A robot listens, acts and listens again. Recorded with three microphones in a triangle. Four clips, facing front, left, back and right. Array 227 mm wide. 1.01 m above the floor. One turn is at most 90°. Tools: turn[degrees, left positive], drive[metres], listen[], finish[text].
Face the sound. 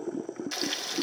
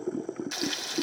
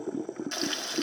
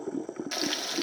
Thought: The frying: 110° right.
Action: turn[-90]
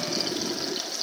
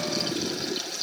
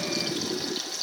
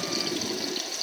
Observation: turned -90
Thought: The frying is now 20° right.
Action: turn[-20]
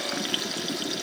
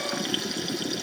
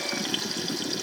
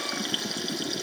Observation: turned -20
Action: finish[Found it: frying, straight ahead.]